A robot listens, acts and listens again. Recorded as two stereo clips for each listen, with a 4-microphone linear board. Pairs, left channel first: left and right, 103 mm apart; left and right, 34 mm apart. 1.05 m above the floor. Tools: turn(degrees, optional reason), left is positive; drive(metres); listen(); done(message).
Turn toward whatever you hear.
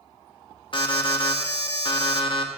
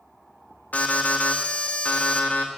turn(degrees=55, reason="The alarm: about 55° left or 125° left.")
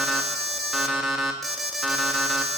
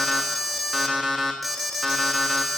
done("Found it: an alarm, straight ahead.")